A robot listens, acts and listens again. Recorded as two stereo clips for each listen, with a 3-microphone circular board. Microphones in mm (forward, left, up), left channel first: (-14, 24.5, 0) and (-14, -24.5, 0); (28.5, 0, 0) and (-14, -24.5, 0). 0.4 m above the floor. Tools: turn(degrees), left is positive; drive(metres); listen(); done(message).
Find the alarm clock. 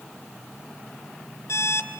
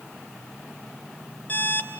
turn(degrees=80)
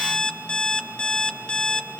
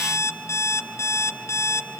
turn(degrees=25)
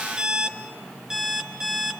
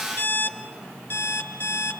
turn(degrees=-10)
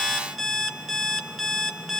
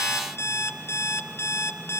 done("Facing the alarm clock.")